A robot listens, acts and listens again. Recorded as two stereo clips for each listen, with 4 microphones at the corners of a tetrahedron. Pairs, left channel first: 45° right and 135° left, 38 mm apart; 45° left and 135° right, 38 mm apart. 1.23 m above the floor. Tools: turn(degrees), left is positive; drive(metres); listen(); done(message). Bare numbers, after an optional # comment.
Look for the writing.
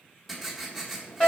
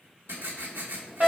# The writing: 135° right.
turn(-135)
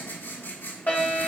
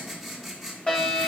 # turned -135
# The writing is now 45° right.
turn(-45)
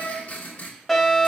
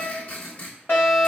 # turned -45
done("Found it: writing, straight ahead.")